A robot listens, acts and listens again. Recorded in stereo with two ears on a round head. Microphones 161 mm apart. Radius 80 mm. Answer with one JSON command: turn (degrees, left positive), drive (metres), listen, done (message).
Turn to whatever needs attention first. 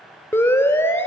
{"turn": 30}
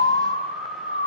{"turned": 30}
{"turn": 130}
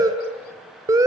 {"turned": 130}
{"turn": -25}
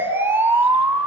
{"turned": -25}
{"turn": -15}
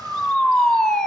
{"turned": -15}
{"done": "Found it: a siren, straight ahead, 2 to 4 m away."}